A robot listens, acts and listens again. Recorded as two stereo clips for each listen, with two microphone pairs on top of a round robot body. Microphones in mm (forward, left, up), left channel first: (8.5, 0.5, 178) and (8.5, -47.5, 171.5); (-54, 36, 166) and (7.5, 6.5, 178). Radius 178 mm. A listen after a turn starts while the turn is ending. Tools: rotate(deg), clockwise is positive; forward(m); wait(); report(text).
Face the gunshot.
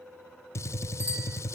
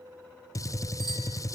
rotate(-120)
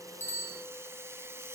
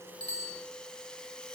report("I heard a gunshot from this way, but can't make it out now.")